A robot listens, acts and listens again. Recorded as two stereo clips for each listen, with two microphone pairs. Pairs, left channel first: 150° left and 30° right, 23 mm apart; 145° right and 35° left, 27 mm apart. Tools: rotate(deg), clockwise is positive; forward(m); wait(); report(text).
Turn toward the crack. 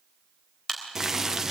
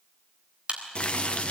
rotate(-80)
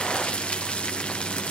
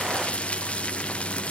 report("Facing where the crack came from. I can't hear it now.")